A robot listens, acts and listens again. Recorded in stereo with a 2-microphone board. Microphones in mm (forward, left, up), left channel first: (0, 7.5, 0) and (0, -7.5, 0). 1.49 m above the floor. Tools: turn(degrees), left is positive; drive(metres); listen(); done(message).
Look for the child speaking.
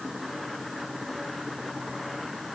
listen()
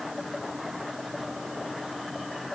listen()
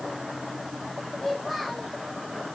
turn(degrees=30)
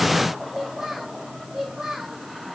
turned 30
turn(degrees=-25)
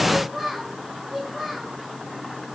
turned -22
done("Facing the child speaking.")